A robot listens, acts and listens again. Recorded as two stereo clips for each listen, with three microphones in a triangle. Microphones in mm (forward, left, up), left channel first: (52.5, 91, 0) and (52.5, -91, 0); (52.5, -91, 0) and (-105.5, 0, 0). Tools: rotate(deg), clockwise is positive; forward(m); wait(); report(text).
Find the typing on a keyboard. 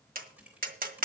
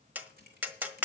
rotate(175)
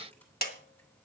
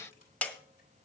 wait()
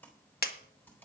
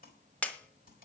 rotate(-10)
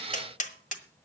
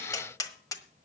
wait()
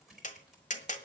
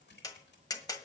report("Found it: typing on a keyboard, straight ahead, 2 to 4 m away.")